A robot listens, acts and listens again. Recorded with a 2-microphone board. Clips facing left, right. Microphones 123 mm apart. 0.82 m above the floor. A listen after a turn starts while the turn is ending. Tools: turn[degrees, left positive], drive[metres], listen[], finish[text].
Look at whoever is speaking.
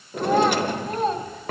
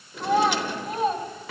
Action: turn[-30]
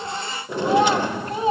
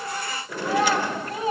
Thought: So it is at 25° left.
Action: turn[25]
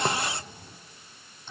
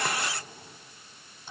Action: listen[]
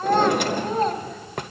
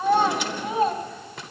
Thought: The child speaking is now 10° right.
Action: turn[-10]
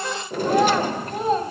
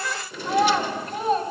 Action: finish[Found it: a child speaking, straight ahead.]